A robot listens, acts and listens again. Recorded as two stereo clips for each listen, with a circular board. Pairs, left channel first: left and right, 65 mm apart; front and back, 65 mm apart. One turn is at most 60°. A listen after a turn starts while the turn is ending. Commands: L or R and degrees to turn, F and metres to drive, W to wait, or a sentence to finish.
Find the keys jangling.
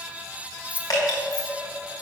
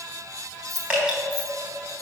R60
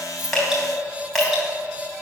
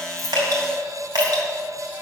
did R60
R60
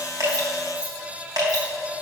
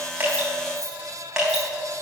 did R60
R30
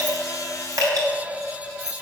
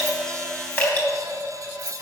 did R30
L55
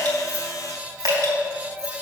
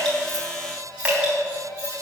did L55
W
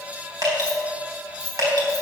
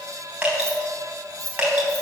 L10
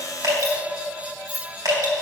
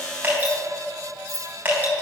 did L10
Facing the keys jangling.